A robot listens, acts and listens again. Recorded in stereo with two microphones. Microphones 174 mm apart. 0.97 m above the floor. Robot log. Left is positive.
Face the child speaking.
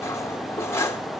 cmd idle
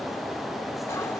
cmd idle
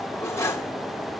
end: I can't make out a child speaking to turn to.